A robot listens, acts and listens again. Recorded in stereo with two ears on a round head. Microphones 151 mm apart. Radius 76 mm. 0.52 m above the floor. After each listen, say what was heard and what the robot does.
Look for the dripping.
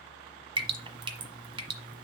The dripping: about 30° right or 150° right. Turn 30° right.
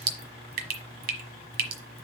So it is at 120° right. Turn 120° right.
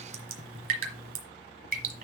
The dripping is now 50° right. Turn 50° right.
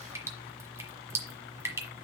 The dripping is now 15° right. Turn 15° right.
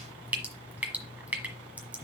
The dripping is now 10° right. Turn 10° right.
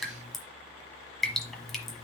Found it: dripping, straight ahead.